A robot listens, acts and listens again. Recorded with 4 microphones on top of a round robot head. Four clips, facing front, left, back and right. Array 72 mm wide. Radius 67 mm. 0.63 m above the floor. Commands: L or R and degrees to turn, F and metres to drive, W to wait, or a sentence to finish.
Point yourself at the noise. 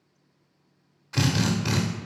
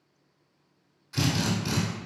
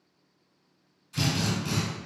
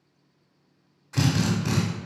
R30
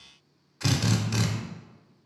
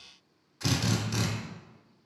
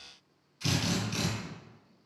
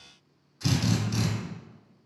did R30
L15
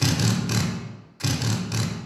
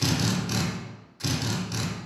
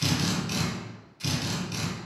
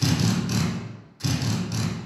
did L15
Facing the drill.